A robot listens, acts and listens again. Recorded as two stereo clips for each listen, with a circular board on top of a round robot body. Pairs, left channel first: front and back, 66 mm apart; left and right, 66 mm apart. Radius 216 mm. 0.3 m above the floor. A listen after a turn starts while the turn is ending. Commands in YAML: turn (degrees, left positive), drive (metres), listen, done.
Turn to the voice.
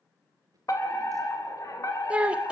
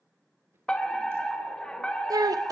turn: -105
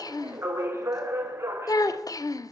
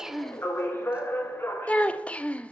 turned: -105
turn: 20
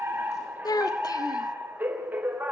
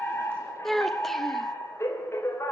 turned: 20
done: "Facing the child speaking, 1 to 2 m away."